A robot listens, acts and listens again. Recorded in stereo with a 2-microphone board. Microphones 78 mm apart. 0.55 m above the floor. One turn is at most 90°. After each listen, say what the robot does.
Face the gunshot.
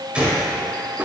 Turn 30° right.
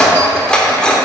Keep listening.
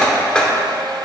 I heard a gunshot, but can't make it out now. It was about 15° left or 135° right.